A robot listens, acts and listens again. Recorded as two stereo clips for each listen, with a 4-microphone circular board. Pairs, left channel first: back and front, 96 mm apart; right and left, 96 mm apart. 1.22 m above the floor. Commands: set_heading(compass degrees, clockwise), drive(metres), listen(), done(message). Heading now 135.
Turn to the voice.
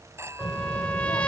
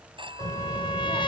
set_heading(350)
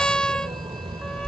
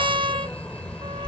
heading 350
set_heading(0)
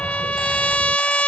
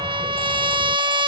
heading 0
listen()
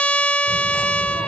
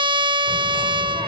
listen()
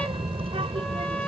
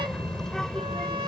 done("Facing the child speaking.")